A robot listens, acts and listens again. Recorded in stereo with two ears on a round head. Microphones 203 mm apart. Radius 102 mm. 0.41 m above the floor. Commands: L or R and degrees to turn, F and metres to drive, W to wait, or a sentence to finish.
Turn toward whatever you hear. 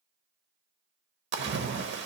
R55
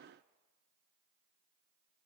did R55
W
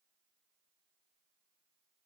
I heard a splash, but can't make it out now. It was about straight ahead or 70° right.